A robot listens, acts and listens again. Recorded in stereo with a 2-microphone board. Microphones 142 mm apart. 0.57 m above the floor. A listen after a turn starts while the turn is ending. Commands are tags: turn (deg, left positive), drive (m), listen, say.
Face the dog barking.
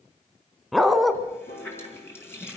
<turn deg="30"/>
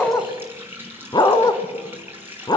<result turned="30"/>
<turn deg="150"/>
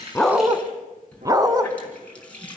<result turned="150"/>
<turn deg="-25"/>
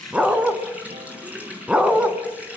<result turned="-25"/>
<say>Facing the dog barking.</say>